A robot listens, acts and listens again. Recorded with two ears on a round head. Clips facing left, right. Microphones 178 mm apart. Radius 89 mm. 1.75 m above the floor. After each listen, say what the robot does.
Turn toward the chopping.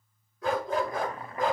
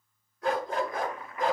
Turn 30° left.
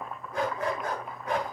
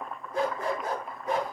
Facing the chopping, 1 to 2 m away.